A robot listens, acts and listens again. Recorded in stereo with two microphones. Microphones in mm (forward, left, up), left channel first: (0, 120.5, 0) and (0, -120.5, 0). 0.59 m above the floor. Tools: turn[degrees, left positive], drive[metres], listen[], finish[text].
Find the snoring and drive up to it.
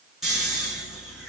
Action: turn[30]
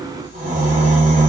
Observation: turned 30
Thought: So it is at 35° right.
Action: turn[-35]
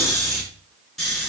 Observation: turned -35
Action: drive[1.0]
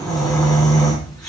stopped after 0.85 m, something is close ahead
Action: finish[Something is in my way. I am facing the snoring but have not reached it.]